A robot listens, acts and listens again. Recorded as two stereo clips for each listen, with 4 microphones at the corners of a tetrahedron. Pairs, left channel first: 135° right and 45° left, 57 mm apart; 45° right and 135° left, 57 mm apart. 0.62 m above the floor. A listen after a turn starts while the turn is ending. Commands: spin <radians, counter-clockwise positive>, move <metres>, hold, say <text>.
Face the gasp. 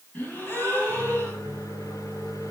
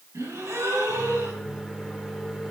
spin 2.88
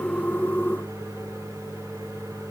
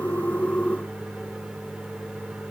say I heard a gasp from this way, but can't make it out now.